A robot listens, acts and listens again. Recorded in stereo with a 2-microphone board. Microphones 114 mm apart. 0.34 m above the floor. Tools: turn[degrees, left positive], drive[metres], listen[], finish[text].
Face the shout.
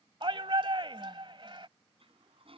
Thought: The shout: about 50° right or 130° right.
Action: turn[-50]
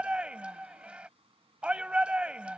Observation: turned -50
Thought: So it is at 15° right.
Action: turn[-15]
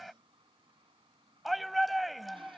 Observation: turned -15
Action: finish[Found it: a shout, straight ahead.]